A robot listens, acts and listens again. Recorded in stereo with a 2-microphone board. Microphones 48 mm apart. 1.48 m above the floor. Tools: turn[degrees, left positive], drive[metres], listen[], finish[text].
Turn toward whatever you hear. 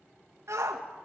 Action: turn[-90]
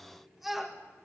Action: finish[Found it: a shout, straight ahead.]